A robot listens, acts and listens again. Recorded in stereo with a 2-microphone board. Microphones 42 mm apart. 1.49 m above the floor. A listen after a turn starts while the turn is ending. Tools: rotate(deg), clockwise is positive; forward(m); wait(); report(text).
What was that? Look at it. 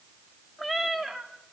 rotate(30)
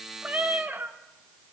rotate(130)
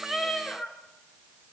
rotate(-20)
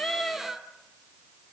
report("Found it: a cat meowing, straight ahead.")